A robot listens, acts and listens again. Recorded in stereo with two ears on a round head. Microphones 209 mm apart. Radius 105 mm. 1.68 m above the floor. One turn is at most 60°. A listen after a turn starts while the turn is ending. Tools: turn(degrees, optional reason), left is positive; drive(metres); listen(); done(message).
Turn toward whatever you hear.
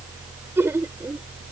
turn(degrees=-30)
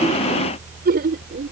turn(degrees=-60, reason="So it is at 135° right.")
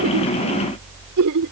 turn(degrees=-60, reason="The laughter is now 75° right.")
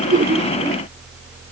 turn(degrees=-15, reason="Nothing new. It was at 15° right.")
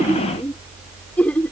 done("Found it: laughter, straight ahead.")